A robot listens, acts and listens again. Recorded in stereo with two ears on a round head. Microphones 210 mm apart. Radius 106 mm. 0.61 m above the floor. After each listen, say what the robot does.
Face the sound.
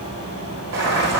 Turn 65° right.
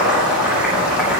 Facing the boiling, over 4 m away.